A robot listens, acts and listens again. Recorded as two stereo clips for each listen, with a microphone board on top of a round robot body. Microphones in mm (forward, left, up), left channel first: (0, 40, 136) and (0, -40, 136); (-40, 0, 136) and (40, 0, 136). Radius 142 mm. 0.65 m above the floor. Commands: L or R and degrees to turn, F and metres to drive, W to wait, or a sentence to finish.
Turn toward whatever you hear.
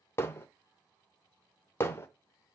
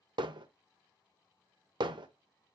L30
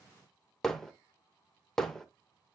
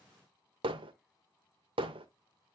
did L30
Found it: hammering, straight ahead, under 1 m away.